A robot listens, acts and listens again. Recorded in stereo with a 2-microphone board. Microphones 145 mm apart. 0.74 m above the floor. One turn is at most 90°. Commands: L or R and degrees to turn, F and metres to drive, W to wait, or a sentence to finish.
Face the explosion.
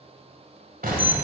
R90
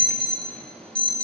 I heard an explosion from this way, but can't make it out now.